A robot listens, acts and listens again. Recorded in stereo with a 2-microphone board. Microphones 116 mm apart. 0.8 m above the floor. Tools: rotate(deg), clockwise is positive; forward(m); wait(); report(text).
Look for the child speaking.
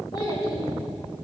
rotate(-40)
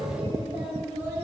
rotate(20)
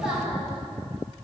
report("Found it: a child speaking, straight ahead.")